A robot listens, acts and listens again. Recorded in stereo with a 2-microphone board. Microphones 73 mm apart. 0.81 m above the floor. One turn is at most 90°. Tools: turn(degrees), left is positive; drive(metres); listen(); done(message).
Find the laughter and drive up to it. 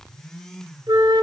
listen()
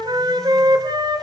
listen()
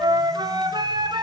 done("I can't make out laughter, only a flute.")